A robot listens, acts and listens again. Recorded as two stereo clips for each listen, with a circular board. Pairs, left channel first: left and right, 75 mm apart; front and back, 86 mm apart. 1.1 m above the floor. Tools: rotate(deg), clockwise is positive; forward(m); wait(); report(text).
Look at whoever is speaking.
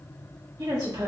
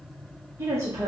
rotate(125)
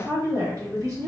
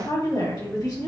rotate(50)
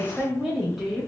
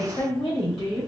report("Facing the woman speaking, 1 to 2 m away.")